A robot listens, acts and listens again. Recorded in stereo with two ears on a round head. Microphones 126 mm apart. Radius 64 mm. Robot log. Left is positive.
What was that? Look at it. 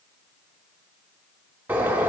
cmd yaw -30
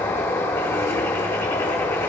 note: So it is at 20° left.
cmd yaw +20
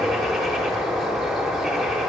end: Found it: a bird, straight ahead, 1 to 2 m away.